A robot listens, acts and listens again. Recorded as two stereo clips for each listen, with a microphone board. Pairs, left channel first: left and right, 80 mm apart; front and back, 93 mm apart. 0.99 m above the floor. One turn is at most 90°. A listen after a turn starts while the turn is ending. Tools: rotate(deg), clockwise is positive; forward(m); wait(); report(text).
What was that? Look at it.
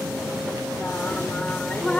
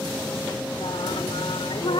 rotate(-15)
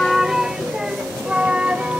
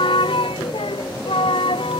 rotate(15)
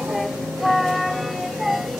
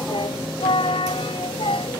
report("Facing the singing.")